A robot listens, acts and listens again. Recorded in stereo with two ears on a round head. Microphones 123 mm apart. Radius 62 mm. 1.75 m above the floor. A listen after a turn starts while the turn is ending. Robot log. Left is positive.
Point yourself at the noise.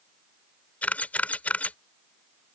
cmd yaw +30
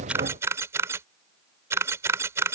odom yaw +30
note: So it is at 20° right.
cmd yaw -20
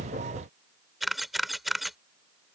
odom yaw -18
end: Found it: a camera shutter, straight ahead.